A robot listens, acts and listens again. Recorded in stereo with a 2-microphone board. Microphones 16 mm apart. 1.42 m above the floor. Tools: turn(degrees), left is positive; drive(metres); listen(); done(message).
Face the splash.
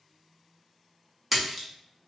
turn(degrees=-30)
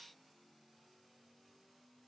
listen()
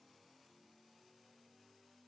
done("I heard a splash, but can't make it out now. It was about 25° left or 145° right.")